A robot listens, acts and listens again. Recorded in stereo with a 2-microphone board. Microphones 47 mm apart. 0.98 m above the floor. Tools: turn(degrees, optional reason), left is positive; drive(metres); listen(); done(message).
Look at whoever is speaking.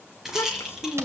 turn(degrees=60, reason="The child speaking: about 60° left or 120° left.")
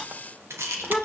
done("Facing the child speaking.")